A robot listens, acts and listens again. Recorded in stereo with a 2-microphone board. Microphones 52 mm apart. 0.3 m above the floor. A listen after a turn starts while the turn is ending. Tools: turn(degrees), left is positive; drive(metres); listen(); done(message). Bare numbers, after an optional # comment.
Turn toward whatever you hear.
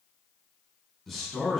turn(30)
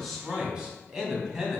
# So it is at 10° right.
turn(-10)
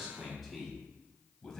# The man speaking is now 10° left.
turn(10)
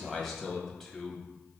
# The man speaking is now 10° left.
turn(10)
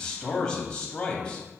# The man speaking is now 20° left.
turn(20)
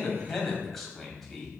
done("Found it: a man speaking, straight ahead.")